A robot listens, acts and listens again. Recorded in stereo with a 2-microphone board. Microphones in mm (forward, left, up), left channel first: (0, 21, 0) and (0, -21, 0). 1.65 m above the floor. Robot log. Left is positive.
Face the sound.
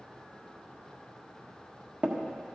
note: The tapping: about 40° right or 140° right.
cmd yaw -40
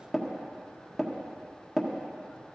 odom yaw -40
end: Facing the tapping, 1 to 2 m away.